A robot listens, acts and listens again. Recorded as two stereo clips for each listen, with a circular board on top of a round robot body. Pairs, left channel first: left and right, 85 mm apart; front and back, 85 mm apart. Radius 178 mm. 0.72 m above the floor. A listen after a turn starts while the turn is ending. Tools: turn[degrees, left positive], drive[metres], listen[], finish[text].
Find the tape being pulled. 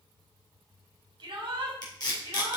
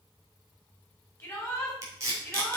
Thought: The tape being pulled: 130° left.
Action: turn[130]
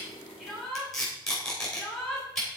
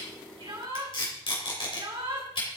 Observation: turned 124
Action: finish[Facing the tape being pulled, 2 to 4 m away.]